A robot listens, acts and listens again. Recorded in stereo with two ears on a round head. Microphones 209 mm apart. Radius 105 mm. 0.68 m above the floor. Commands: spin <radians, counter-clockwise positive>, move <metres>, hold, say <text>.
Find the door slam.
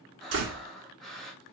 spin -0.96
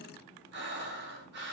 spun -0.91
hold
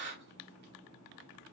say I heard a door slam, but can't make it out now. It was about straight ahead or 75° right.